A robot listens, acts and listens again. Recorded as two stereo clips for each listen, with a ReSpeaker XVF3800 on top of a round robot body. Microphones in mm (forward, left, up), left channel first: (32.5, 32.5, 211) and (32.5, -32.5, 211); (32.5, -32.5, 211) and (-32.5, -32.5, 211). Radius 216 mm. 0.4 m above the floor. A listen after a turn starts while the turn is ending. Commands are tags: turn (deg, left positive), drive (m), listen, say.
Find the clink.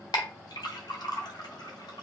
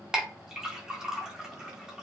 <turn deg="100"/>
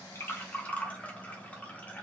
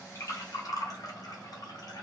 <turn deg="20"/>
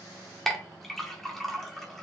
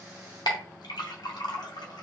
<say>Found it: a clink, straight ahead.</say>